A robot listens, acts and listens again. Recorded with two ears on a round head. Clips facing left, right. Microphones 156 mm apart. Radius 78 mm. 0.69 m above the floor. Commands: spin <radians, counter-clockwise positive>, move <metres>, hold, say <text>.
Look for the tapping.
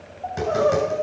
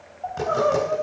spin 0.35
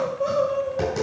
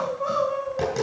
say Facing the tapping, over 4 m away.